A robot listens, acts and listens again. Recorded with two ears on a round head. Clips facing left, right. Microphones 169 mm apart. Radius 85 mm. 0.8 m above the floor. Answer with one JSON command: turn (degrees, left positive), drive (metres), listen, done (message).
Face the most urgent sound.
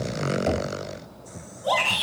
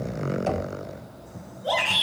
{"turn": 65}
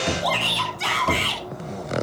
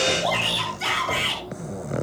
{"turn": 50}
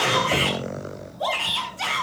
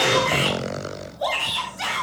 {"turn": -15}
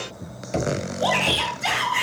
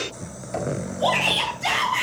{"done": "Found it: a shout, straight ahead, over 4 m away."}